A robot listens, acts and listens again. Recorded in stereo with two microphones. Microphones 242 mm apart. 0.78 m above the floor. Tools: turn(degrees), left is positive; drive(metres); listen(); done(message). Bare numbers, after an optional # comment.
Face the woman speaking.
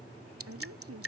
turn(-90)
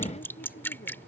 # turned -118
# So it is at 35° left.
turn(35)
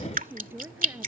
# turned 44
# The woman speaking is now 10° right.
turn(-10)
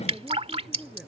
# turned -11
done("Facing the woman speaking.")